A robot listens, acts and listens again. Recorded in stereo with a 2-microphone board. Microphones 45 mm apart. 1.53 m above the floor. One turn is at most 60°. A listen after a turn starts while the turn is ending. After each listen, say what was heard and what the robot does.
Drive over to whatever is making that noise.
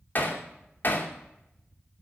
The hammering: about 45° left or 135° left. Turn 45° left.
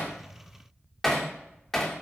Drive 1.0 m forward.
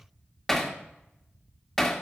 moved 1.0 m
Drive 1.0 m forward.
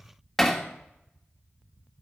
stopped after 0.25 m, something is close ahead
Arrived at the hammering, straight ahead.